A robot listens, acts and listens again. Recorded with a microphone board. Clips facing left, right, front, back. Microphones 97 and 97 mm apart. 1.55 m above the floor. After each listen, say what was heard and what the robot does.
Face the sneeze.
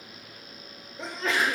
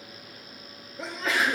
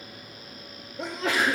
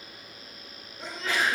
Facing the sneeze, 2 to 4 m away.